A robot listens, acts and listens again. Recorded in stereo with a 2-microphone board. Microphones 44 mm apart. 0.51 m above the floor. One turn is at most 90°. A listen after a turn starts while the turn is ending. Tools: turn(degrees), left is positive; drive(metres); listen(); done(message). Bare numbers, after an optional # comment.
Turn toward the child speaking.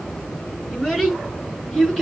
turn(30)
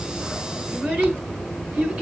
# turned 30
# So it is at 30° right.
turn(-30)
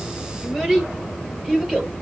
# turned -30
done("Found it: a child speaking, straight ahead, over 4 m away.")